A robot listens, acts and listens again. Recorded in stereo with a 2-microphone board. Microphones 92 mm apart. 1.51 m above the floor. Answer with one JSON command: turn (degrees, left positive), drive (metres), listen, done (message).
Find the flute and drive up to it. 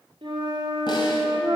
{"turn": -60}
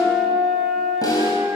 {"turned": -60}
{"drive": 1.0}
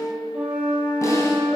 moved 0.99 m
{"turn": -15}
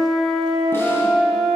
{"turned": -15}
{"drive": 1.0}
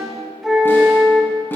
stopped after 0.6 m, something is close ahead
{"done": "I am next to the flute."}